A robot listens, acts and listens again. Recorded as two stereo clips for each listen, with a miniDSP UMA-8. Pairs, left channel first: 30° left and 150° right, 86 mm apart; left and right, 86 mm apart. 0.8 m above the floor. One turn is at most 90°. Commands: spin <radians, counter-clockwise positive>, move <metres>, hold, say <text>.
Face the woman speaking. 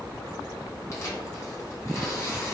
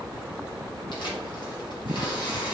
hold
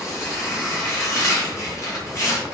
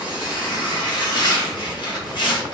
hold
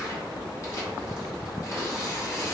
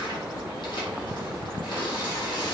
say I can't make out a woman speaking, only tearing paper.